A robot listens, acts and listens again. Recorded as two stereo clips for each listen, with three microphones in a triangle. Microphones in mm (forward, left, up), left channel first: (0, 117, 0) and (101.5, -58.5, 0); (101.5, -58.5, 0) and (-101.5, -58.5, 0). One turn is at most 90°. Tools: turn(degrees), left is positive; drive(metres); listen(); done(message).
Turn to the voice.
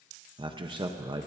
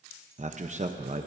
turn(degrees=-90)
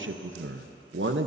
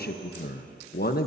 turn(degrees=-40)
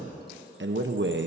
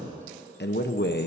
turn(degrees=-35)
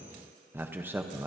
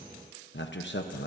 turn(degrees=20)
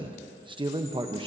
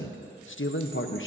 done("Found it: a man speaking, straight ahead.")